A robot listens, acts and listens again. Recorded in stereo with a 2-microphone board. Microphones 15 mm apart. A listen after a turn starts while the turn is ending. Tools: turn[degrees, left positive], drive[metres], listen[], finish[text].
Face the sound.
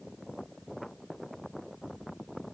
Action: listen[]
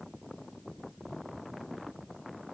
Action: listen[]
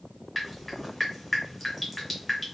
Action: turn[30]
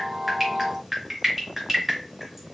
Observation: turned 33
Thought: So it is at 20° right.
Action: turn[-20]
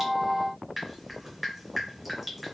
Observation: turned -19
Action: finish[Facing the dripping, 1 to 2 m away.]